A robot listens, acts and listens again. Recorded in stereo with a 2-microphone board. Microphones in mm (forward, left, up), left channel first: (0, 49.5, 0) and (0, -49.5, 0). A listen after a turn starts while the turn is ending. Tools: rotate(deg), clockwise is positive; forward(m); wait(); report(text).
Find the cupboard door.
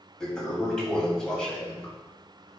wait()
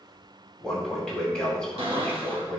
rotate(70)
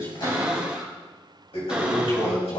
rotate(10)
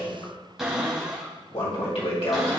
report("Found it: a cupboard door, straight ahead.")